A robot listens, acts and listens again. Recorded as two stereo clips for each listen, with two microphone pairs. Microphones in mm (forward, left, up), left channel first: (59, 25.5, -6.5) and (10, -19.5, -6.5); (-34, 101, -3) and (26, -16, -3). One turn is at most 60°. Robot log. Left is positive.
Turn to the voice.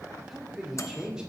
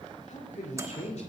note: The man speaking: 145° left.
cmd yaw +60
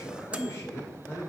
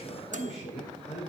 note: The man speaking is now 95° left.
cmd yaw +60
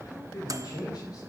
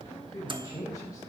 note: The man speaking is now 55° left.
cmd yaw +55
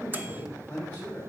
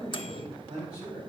note: The man speaking is now 20° right.
cmd yaw -20
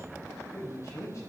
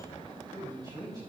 end: Facing the man speaking, over 4 m away.